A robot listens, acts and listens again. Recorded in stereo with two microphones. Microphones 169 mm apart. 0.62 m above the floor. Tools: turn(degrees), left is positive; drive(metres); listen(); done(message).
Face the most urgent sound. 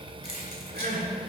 turn(degrees=-60)
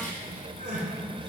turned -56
turn(degrees=-60)
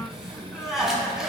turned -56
done("Facing the crying, 1 to 2 m away.")